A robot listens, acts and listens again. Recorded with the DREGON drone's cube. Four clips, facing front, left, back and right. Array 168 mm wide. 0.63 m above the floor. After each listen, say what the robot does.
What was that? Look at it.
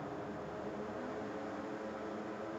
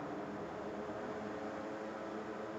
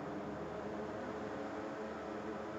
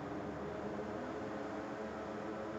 Keep listening.
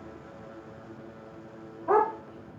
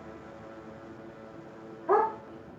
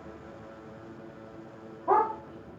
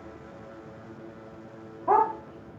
Turn 110° right.
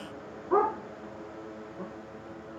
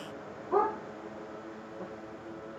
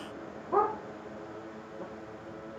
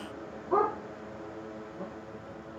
Turn 25° right.
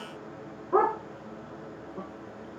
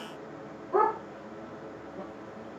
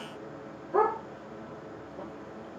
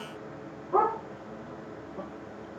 Turn 15° right.
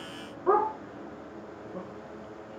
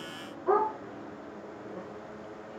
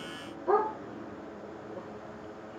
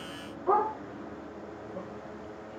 Found it: a dog barking, straight ahead, over 4 m away.